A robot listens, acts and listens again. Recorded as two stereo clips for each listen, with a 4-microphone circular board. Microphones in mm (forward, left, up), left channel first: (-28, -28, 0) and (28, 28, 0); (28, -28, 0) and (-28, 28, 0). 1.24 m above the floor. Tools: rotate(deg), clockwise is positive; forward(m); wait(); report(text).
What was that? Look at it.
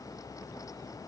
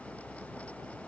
wait()
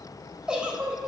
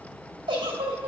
rotate(-125)
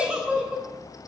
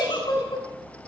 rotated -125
rotate(35)
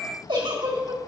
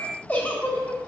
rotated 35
rotate(-25)
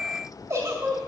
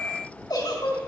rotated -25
rotate(10)
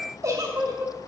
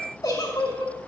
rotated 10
report("Found it: a giggle, straight ahead.")